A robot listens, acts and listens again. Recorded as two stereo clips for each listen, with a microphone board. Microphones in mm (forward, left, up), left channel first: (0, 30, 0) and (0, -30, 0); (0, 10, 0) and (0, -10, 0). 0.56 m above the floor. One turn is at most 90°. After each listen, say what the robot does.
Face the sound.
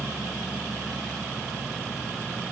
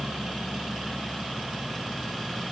Keep listening.
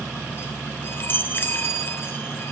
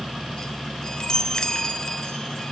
Turn 35° left.
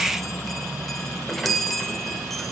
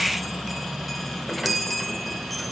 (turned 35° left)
Facing the chime, 1 to 2 m away.